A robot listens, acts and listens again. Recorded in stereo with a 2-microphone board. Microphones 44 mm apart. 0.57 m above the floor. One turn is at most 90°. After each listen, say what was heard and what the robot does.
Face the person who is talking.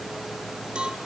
Keep listening.
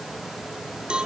Keep listening.
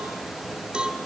I can't make out anyone speaking to turn to.